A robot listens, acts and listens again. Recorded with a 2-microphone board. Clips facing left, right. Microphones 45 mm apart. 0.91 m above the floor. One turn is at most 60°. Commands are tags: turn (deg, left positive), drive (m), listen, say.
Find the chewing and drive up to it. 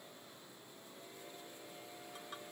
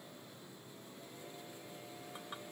<listen/>
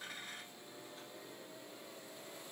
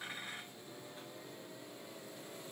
<listen/>
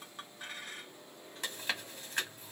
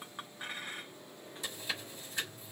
<turn deg="55"/>
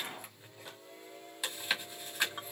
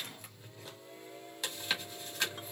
<turn deg="10"/>
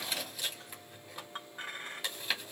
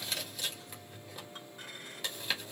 <drive m="1.0"/>
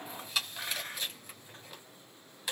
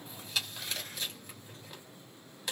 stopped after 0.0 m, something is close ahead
<say>Something is in my way. I am facing the chewing but have not reached it.</say>